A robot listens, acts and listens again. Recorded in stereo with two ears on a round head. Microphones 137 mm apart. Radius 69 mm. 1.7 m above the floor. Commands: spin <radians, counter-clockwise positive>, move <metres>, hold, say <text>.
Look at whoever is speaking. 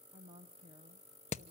spin -0.61
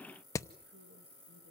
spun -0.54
hold
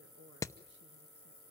hold
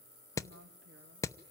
spin -1.66
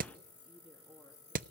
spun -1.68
spin 0.17
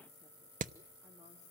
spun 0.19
hold
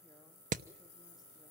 hold
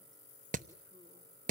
say Facing where the woman speaking came from. I can't hear it now.